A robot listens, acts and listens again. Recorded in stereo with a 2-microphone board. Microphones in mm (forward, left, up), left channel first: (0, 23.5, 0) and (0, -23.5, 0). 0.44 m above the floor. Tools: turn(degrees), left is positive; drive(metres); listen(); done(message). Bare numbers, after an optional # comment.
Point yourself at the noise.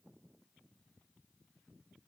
listen()
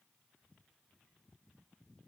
listen()
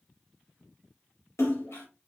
turn(90)
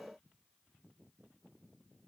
done("Facing where the splash came from. I can't hear it now.")